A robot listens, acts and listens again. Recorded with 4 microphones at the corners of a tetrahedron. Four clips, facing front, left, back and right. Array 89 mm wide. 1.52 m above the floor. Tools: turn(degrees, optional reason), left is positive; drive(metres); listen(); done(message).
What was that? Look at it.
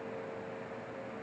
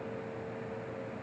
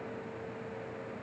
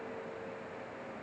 listen()
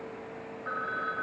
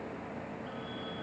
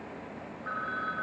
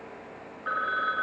turn(degrees=-80, reason="The phone ringing: 80° right.")
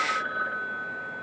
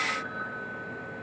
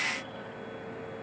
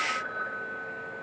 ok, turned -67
turn(degrees=-15, reason="The phone ringing is now 15° right.")
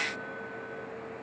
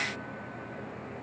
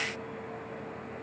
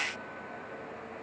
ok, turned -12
listen()
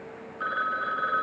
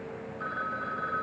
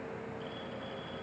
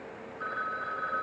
done("Found it: a phone ringing, straight ahead.")